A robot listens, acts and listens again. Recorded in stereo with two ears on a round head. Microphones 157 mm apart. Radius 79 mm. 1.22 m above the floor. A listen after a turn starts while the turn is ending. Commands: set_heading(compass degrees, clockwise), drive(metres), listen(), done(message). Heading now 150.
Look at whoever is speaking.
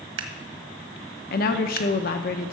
set_heading(95)
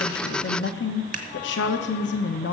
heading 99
set_heading(24)
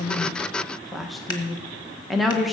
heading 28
done("Found it: a woman speaking, straight ahead.")